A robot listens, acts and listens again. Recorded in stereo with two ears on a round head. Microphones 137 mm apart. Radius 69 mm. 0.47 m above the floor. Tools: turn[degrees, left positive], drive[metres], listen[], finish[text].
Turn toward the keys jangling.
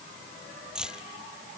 Action: turn[-30]
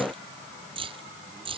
Thought: So it is at 145° right.
Action: turn[-145]
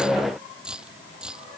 Action: finish[Found it: keys jangling, straight ahead.]